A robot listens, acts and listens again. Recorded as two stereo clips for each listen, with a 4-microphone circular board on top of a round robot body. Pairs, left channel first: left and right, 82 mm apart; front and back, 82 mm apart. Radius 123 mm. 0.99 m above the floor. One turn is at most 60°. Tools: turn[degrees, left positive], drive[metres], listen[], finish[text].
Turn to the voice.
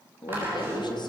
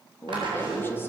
Thought: The woman speaking: 65° left.
Action: turn[60]
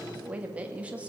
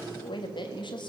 Thought: The woman speaking is now 15° right.
Action: turn[-15]
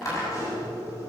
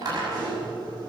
Action: listen[]
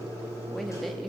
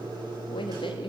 Action: listen[]
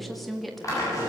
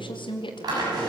Action: finish[Facing the woman speaking, 2 to 4 m away.]